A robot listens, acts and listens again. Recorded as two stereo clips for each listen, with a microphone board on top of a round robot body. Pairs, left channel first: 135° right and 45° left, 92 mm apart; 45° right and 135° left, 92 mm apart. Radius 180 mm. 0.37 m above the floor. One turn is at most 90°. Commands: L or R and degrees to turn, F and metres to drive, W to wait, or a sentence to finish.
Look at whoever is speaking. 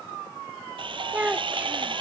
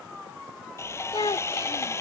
R30
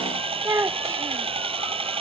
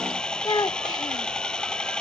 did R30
R10
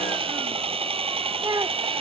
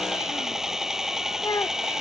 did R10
Found it: a child speaking, straight ahead.